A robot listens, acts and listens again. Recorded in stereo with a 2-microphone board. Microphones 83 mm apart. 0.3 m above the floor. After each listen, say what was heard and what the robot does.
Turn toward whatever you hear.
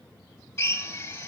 The drill: about 35° left or 145° left. Turn 35° left.
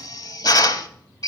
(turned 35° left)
So it is at 105° left. Turn 105° left.
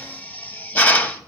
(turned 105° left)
The drill is now 30° left. Turn 30° left.
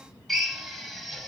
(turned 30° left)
Facing the drill, under 1 m away.